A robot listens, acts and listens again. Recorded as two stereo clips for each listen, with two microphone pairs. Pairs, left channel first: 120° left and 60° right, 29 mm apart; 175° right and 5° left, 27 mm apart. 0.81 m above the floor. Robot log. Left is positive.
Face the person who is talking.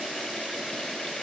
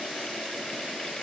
cmd idle
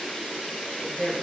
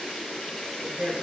note: The woman speaking: 30° left.
cmd yaw +30
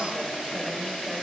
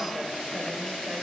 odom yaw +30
cmd idle
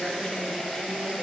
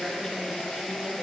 note: The woman speaking is now 20° left.
cmd yaw +20
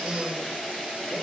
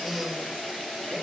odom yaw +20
end: Found it: a woman speaking, straight ahead, 2 to 4 m away.